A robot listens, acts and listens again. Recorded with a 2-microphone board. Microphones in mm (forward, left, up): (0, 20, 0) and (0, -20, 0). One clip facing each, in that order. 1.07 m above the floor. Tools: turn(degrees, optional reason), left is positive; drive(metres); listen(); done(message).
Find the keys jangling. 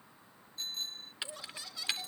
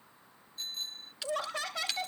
turn(degrees=15, reason="The keys jangling: about 15° left or 165° left.")
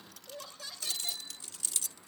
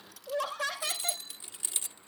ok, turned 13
turn(degrees=-30, reason="So it is at 30° right.")
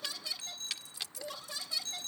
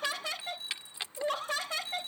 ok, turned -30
turn(degrees=-35, reason="The keys jangling is now 35° right.")
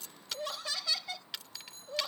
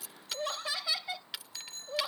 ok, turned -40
turn(degrees=-10, reason="The keys jangling is now 10° right.")
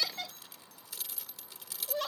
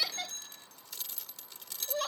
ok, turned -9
done("Found it: keys jangling, straight ahead.")